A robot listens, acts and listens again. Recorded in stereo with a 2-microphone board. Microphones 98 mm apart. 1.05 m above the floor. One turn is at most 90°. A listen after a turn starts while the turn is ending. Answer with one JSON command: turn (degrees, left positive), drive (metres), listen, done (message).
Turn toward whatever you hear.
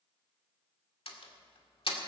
{"turn": 70}
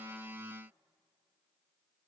{"listen": true}
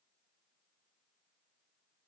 {"done": "I heard a door slam, but can't make it out now. It was about straight ahead or 40° left."}